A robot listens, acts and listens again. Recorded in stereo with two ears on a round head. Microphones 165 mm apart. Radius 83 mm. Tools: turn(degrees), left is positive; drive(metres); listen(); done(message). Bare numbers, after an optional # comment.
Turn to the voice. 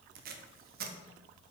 listen()
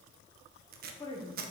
# The woman speaking: about 25° left or 155° left.
turn(25)
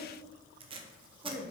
done("Found it: a woman speaking, straight ahead.")